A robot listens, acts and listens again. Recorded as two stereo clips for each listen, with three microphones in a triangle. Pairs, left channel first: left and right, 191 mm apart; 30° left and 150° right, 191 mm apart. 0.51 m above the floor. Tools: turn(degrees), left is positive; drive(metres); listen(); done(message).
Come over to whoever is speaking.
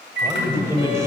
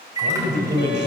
turn(degrees=-165)
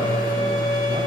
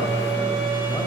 listen()
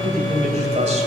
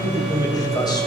turn(degrees=-40)
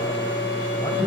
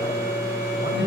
turn(degrees=20)
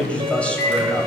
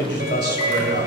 drive(metres=1.0)
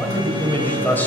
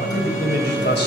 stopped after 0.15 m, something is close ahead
turn(degrees=10)
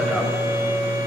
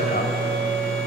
listen()
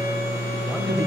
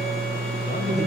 listen()
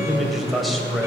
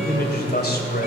done("Blocked. The man speaking is further on, straight ahead.")